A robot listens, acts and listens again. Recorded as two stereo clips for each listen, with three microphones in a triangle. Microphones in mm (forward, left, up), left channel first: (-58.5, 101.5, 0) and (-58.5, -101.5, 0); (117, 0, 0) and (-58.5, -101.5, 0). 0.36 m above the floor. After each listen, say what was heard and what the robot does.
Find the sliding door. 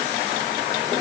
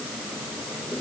Keep listening.
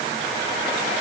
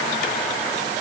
Keep listening.
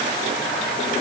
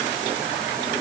I can't make out a sliding door to turn to.